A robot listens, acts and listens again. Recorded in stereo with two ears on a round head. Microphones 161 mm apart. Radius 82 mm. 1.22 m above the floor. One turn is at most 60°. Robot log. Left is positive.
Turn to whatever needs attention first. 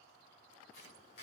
cmd idle
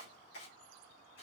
cmd idle
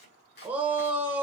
cmd yaw -30
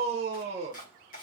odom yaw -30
note: So it is at 140° right.
cmd yaw -60
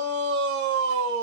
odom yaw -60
note: The shout is now 100° right.
cmd yaw -60
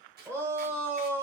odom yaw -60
note: The shout is now 15° right.
cmd yaw -15
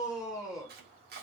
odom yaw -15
end: Found it: a shout, straight ahead.